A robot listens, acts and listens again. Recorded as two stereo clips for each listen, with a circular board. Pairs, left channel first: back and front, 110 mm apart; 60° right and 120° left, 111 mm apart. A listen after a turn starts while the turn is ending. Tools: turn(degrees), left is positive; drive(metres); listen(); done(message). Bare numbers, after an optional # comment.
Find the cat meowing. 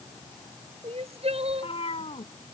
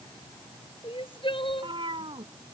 # The cat meowing: 155° left.
turn(155)
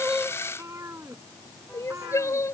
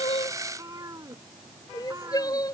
# The cat meowing is now 65° left.
turn(65)
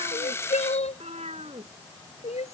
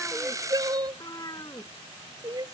done("Facing the cat meowing.")